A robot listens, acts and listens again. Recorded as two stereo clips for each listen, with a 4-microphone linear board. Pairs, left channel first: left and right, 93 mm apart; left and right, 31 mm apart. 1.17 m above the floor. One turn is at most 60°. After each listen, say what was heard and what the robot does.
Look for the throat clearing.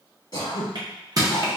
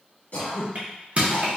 The throat clearing: about 45° left or 135° left. Turn 45° left.
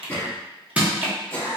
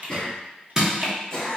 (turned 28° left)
So it is at 20° left. Turn 20° left.
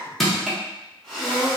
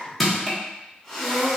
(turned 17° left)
Facing the throat clearing, 1 to 2 m away.